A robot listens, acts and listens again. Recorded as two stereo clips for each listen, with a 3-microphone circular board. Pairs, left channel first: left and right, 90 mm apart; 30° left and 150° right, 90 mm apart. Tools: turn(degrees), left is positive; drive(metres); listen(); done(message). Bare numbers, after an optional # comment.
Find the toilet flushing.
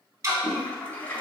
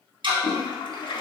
# The toilet flushing: 25° left.
turn(25)
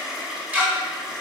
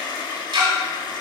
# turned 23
done("Facing the toilet flushing.")